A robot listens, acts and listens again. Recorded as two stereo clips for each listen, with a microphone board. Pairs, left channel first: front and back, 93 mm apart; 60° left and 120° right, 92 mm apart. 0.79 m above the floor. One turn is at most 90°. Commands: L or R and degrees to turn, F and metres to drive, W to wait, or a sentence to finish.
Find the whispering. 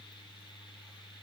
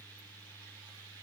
W
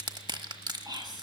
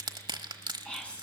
L90
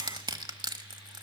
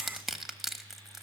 L50
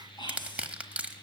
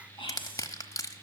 L35
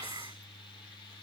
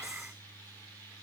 W
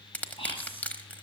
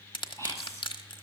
Found it: whispering, straight ahead.